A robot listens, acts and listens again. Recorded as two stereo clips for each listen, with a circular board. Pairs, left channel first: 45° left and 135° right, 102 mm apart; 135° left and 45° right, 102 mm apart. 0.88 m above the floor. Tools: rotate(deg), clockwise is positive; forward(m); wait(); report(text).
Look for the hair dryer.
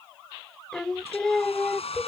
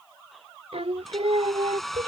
rotate(-45)
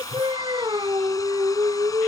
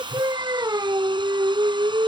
wait()
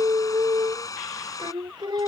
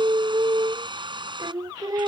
rotate(10)
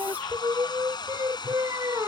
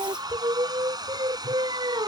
report("Facing the hair dryer.")